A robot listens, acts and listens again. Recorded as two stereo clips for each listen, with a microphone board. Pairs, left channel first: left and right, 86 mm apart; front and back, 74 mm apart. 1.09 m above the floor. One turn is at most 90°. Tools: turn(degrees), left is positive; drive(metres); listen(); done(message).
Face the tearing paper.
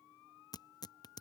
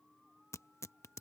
turn(degrees=50)
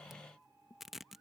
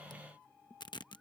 done("Facing the tearing paper.")